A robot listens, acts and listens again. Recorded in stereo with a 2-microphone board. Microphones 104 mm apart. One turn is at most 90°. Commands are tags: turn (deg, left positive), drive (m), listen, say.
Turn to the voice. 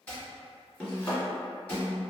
<listen/>
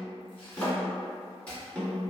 <listen/>
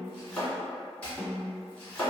<say>I can't make out anyone speaking to turn to.</say>